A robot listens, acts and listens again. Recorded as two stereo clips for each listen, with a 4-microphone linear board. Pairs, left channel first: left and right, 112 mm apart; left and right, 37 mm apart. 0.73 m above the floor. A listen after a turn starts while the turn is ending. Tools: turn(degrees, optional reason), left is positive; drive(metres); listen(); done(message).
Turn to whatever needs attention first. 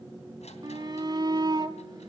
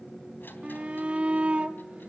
turn(degrees=-40, reason="The shout: about 40° right or 140° right.")
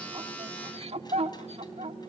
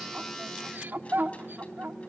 turn(degrees=-100, reason="So it is at 100° right.")
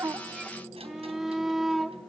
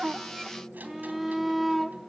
done("Found it: a shout, straight ahead.")